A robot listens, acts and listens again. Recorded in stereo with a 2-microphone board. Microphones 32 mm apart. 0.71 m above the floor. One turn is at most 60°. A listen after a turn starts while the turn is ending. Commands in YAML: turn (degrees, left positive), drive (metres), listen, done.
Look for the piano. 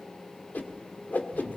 listen: true
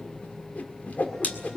listen: true
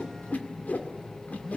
done: "I can't make out a piano, only a whoosh and a phone buzzing."